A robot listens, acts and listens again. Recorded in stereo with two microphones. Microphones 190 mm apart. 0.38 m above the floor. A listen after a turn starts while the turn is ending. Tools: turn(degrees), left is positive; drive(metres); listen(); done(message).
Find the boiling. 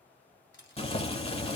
turn(degrees=30)
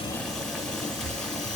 done("Found it: boiling, straight ahead, under 1 m away.")